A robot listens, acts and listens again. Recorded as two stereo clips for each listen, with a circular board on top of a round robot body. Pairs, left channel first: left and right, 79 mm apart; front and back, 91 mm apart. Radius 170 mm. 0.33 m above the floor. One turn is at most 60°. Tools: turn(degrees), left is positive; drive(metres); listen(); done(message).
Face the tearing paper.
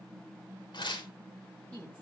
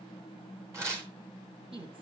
turn(degrees=60)
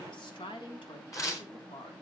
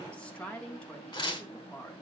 turn(degrees=40)
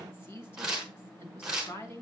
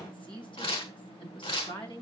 done("Facing the tearing paper, over 4 m away.")